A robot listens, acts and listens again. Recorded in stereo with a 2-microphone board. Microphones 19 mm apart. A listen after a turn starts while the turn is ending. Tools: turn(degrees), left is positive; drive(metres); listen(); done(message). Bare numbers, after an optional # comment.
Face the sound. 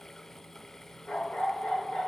turn(90)
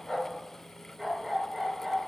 done("Found it: a dog barking, straight ahead, over 4 m away.")